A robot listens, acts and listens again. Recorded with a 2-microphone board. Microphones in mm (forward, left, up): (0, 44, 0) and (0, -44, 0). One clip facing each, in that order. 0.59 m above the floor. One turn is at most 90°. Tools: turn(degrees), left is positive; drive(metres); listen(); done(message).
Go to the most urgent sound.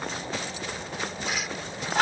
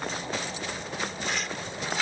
listen()
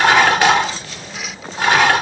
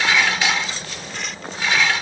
listen()
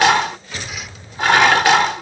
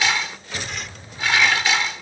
done("I can't make out anything urgent to turn to.")